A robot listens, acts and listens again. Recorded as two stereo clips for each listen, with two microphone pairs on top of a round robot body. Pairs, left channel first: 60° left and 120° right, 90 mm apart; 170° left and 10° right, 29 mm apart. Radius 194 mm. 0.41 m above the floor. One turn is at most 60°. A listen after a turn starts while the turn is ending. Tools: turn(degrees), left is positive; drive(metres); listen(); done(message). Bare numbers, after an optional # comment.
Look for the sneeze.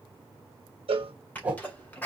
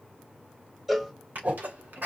# The sneeze: 10° right.
turn(-10)
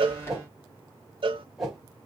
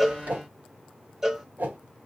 done("I heard a sneeze from this way, but can't make it out now.")